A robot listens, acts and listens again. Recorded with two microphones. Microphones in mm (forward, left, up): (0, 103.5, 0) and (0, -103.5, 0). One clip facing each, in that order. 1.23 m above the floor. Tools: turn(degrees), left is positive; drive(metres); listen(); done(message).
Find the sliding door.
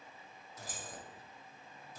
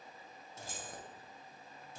listen()
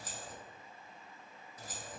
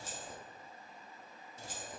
listen()
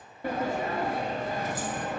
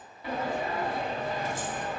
turn(degrees=45)
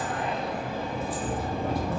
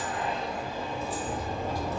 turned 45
turn(degrees=80)
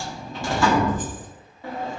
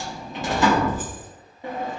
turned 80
turn(degrees=-20)
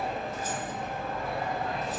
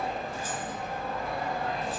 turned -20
done("Found it: a sliding door, straight ahead, under 1 m away.")